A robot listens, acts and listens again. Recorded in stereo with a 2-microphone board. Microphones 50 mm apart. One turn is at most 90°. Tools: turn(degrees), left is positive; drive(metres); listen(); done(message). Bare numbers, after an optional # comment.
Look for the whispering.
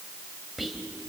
turn(-30)
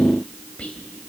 # So it is at 25° left.
turn(25)
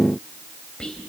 # The whispering is now 15° left.
turn(15)
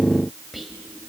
done("Facing the whispering, 2 to 4 m away.")